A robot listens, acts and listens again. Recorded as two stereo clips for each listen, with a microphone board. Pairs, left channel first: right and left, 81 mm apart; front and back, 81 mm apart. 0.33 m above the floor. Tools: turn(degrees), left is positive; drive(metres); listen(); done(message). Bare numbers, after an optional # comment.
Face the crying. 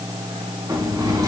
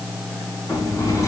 listen()
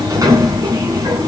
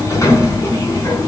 listen()
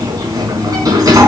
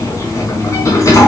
done("I can't make out crying to turn to.")